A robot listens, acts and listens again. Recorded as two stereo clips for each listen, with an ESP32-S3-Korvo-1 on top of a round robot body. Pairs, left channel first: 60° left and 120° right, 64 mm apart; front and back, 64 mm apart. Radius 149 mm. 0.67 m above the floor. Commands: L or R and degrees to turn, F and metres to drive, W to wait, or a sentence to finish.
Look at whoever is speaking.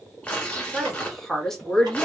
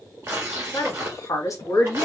R15
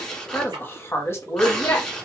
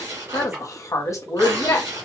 L35
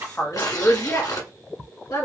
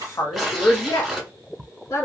L30
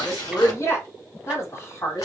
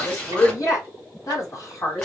L15
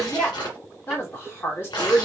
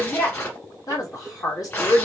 Facing the woman speaking.